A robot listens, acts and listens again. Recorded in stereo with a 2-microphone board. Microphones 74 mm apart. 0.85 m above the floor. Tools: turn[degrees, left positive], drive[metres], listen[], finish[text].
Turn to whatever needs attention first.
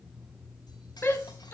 Thought: The shout: about 35° left or 145° left.
Action: turn[35]
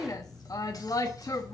Thought: So it is at 105° left.
Action: turn[105]
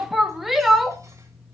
Action: finish[Found it: a shout, straight ahead.]